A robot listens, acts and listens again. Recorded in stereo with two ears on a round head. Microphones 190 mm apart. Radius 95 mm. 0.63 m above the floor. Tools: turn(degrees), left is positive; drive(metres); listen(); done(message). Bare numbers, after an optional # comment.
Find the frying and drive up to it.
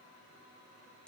listen()
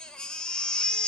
listen()
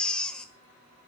done("I can't make out frying, only a baby crying.")